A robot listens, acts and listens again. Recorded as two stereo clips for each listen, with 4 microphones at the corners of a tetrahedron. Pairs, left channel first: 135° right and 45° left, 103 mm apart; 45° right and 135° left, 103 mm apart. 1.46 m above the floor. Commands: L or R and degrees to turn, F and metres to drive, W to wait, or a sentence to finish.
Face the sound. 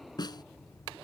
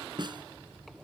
L180
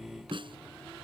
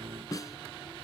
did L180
L10
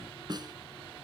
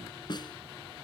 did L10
Found it: a snare drum, straight ahead.